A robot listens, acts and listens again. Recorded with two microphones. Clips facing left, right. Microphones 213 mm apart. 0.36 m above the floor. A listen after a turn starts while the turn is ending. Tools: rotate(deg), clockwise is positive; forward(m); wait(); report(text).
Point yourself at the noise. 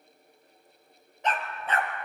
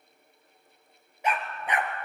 rotate(15)
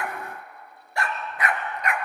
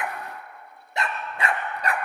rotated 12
rotate(35)
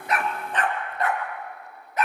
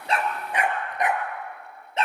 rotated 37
rotate(25)
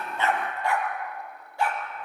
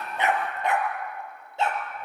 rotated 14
rotate(25)
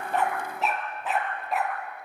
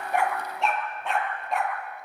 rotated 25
report("Found it: a dog barking, straight ahead, 2 to 4 m away.")